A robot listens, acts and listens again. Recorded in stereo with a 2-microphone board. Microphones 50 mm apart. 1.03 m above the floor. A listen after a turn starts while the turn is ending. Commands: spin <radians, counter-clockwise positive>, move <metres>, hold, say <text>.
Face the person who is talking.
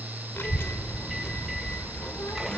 spin 1.05
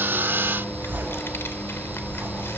spin 1.05
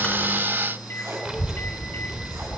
spin -0.26
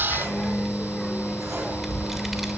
say Facing the child speaking, 1 to 2 m away.